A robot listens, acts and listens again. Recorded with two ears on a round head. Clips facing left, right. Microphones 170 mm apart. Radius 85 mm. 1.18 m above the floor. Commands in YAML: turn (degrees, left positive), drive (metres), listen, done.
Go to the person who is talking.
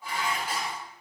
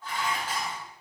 listen: true
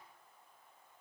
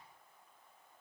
listen: true
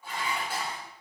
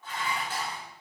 done: "I can't make out anyone speaking to turn to."